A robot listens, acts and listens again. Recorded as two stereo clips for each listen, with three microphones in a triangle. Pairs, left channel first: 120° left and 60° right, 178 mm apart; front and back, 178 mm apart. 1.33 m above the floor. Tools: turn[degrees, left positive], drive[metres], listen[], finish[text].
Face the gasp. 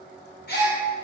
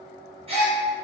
Thought: The gasp: 130° left.
Action: turn[130]
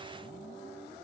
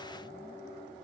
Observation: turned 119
Thought: Nothing new. It was at 10° left.
Action: turn[10]
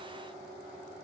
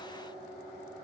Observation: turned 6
Action: finish[Facing where the gasp came from. I can't hear it now.]